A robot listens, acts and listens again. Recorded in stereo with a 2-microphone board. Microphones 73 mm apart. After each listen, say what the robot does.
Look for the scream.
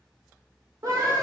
Turn 40° right.
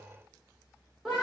Facing the scream.